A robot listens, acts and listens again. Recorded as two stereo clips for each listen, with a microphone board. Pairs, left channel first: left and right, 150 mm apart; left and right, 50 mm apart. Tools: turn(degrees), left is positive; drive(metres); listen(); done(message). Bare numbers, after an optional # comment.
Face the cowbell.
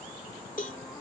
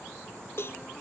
# The cowbell: about 60° left or 120° left.
turn(60)
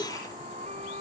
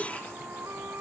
# So it is at 35° left.
turn(35)
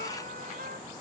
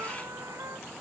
listen()
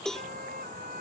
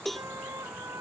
done("Facing the cowbell.")